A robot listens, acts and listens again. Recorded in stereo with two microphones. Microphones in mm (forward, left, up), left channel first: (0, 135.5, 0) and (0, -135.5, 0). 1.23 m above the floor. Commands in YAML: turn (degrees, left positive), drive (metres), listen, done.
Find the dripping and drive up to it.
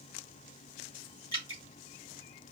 turn: 70
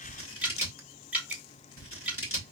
drive: 1.0
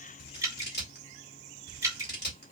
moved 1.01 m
turn: -10
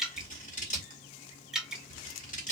drive: 1.0
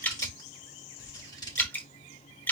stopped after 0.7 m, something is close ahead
done: "Arrived at the dripping, straight ahead."